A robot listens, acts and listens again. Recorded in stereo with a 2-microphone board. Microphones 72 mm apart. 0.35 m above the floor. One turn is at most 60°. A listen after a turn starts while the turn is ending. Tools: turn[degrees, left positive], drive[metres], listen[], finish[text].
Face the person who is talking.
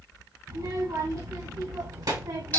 Thought: The child speaking: about 65° right or 115° right.
Action: turn[-60]
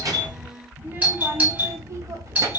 Thought: So it is at 50° right.
Action: turn[-50]
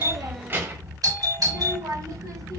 Thought: The child speaking is now 50° right.
Action: turn[-50]
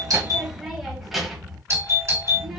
Action: finish[Found it: a child speaking, straight ahead.]